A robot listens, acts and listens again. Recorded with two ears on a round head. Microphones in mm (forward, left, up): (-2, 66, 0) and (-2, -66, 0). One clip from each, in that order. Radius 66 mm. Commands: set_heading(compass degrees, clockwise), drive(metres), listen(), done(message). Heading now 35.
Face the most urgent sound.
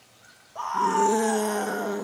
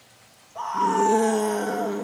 set_heading(10)
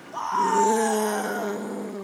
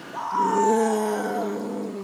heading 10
set_heading(245)
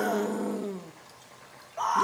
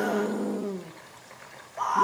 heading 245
set_heading(225)
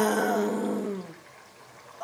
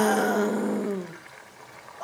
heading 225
done("Found it: a scream, straight ahead.")